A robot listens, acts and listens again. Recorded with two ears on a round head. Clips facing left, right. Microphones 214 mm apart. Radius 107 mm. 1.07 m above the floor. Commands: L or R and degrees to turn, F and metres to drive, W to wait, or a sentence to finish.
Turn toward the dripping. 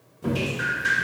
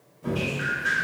L60
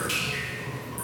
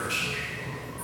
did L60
L55
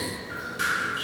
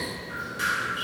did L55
Found it: dripping, straight ahead.